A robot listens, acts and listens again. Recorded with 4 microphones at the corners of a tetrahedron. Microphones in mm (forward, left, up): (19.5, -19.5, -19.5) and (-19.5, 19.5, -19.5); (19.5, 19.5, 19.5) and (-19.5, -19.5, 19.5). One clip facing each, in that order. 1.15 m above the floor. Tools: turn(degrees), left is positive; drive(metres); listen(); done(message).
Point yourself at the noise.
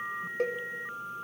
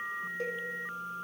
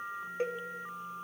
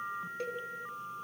turn(degrees=-15)
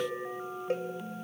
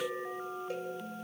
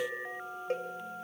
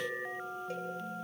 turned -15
done("Found it: a cowbell, straight ahead, 2 to 4 m away.")